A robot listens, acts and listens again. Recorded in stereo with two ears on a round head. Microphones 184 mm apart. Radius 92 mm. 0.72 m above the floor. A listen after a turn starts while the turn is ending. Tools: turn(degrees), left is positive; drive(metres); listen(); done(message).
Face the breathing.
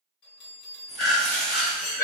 turn(degrees=40)
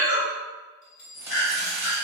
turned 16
turn(degrees=125)
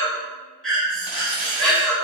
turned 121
done("Found it: breathing, straight ahead.")